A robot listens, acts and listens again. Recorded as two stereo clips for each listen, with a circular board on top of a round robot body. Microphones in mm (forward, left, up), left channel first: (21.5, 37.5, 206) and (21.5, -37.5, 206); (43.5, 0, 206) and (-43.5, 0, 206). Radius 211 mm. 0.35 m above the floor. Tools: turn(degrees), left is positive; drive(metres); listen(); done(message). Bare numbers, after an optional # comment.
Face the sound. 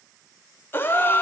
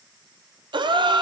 # The gasp: 155° left.
turn(155)
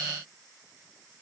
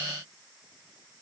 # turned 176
# Nothing new. It was at 25° right.
turn(-25)
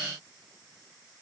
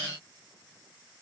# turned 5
# Nothing new. It was at 30° right.
turn(-30)
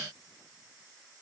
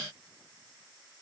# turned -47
# Nothing new. It was at 20° left.
turn(20)
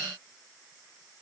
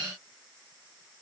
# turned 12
done("Facing where the gasp came from. I can't hear it now.")